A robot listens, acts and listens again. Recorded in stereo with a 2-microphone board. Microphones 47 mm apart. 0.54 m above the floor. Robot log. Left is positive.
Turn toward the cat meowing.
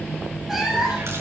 cmd yaw -30
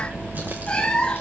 note: So it is at 20° left.
cmd yaw +20
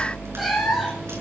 end: Found it: a cat meowing, straight ahead, over 4 m away.